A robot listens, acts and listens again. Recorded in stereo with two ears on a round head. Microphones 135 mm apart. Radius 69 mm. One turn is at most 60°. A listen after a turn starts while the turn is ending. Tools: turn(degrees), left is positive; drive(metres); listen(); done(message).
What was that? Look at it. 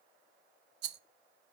turn(degrees=-60)
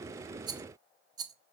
turn(degrees=-25)
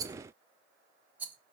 turn(degrees=-10)
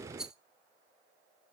done("Facing the rattle.")